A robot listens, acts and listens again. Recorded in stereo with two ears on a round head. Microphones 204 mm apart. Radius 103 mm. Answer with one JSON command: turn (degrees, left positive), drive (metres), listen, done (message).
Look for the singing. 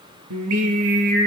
{"turn": -90}
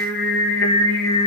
{"turn": 10}
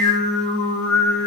{"done": "Found it: singing, straight ahead, over 4 m away."}